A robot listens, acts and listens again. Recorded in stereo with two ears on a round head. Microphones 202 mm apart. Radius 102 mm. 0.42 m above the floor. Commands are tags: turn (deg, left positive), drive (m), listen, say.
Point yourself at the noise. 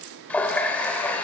<turn deg="30"/>
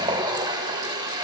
<turn deg="-20"/>
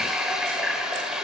<say>Found it: a running tap, straight ahead.</say>